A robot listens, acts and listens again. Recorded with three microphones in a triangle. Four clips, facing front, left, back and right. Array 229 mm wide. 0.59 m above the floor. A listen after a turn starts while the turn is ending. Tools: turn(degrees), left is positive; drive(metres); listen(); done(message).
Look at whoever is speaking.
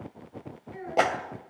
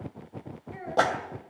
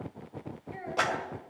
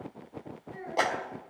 turn(degrees=135)
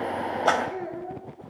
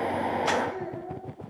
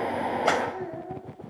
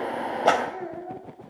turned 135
turn(degrees=15)
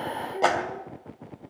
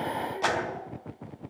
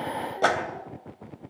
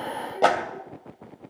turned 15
listen()
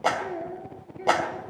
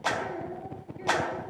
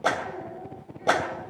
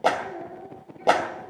turn(degrees=15)
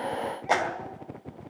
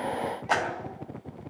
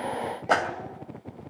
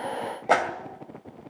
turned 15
done("Facing the child speaking.")